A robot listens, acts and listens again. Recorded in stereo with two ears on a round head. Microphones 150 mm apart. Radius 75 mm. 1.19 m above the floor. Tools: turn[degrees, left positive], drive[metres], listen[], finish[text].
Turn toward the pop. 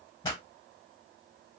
Thought: The pop: about 25° left or 155° left.
Action: turn[25]
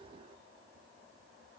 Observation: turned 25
Action: listen[]
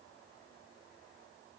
Action: finish[I heard a pop, but can't make it out now. It was about straight ahead or 130° left.]